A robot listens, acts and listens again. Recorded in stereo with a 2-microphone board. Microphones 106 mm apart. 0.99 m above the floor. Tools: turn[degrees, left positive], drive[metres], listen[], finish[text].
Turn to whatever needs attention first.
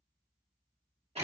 Action: listen[]
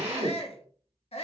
Thought: The shout: about 70° left or 110° left.
Action: turn[70]
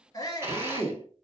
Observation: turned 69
Thought: So it is at 40° left.
Action: turn[40]
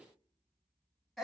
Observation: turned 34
Action: finish[Facing the shout.]